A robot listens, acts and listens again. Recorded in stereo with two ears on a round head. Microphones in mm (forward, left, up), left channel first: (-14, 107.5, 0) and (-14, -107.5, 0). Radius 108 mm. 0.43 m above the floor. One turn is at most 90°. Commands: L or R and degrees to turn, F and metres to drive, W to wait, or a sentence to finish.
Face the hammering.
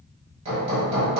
R25
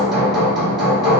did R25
Found it: hammering, straight ahead.